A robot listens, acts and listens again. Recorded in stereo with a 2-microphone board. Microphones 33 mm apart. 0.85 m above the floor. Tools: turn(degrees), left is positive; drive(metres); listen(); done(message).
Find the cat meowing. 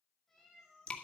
turn(degrees=30)
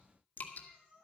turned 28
turn(degrees=-25)
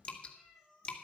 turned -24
done("Found it: a cat meowing, straight ahead, over 4 m away.")